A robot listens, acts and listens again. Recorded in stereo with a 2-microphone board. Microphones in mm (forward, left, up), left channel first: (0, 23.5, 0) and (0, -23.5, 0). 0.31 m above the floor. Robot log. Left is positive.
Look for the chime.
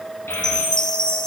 note: The chime: about 20° left or 160° left.
cmd yaw +20
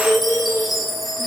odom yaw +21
end: Found it: a chime, straight ahead, 1 to 2 m away.